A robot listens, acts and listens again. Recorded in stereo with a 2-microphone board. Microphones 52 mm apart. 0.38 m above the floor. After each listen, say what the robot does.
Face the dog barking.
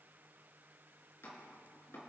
Keep listening.
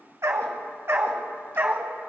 Turn 40° right.
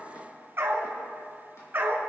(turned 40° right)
Turn 45° right.
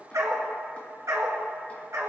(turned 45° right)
Turn 85° right.
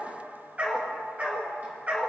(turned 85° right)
Turn 25° right.
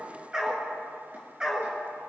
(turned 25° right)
Turn 10° right.
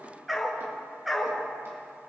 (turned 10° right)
Facing the dog barking.